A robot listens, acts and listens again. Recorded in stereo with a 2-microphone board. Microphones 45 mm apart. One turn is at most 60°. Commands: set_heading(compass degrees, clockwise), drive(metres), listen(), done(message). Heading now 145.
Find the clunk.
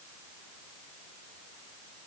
listen()
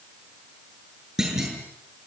set_heading(175)
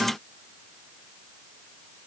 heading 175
listen()
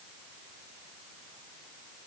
done("I heard a clunk, but can't make it out now. It was about 20° left or 140° right.")